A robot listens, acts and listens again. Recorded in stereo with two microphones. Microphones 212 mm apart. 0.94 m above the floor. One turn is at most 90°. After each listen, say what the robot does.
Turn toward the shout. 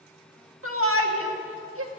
Turn 75° right.
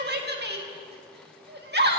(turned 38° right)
Turn 50° right.
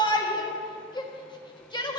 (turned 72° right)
Turn 20° left.
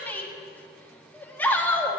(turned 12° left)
Turn 10° left.
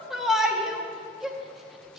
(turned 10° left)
Facing the shout.